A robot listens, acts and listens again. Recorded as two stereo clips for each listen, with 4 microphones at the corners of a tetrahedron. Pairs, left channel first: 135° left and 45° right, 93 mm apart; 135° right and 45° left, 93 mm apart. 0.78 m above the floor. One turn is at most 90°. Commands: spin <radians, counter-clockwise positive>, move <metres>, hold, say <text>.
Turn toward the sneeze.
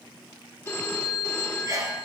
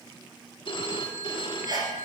say Facing the sneeze.